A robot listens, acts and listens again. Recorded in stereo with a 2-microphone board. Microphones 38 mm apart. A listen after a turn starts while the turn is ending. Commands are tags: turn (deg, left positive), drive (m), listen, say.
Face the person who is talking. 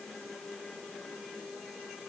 <listen/>
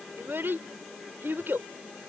<turn deg="-75"/>
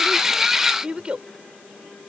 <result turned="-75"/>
<turn deg="-25"/>
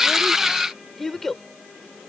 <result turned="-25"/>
<say>Found it: a child speaking, straight ahead.</say>